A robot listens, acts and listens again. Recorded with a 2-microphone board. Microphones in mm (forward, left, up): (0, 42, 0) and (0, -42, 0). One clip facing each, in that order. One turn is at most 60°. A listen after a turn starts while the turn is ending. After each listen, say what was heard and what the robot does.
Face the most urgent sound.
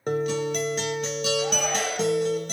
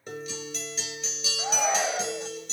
The shout: about 15° right or 165° right. Turn 15° right.
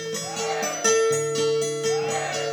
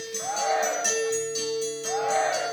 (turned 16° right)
So it is at 150° right. Turn 60° right.
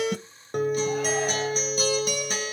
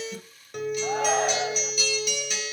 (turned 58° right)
Nothing new. It was at 95° right. Turn 60° right.
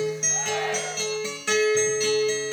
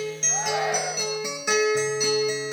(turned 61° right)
Nothing new. It was at 30° right. Turn 30° right.
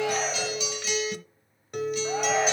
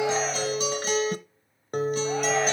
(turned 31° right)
I heard a shout from this way, but can't make it out now.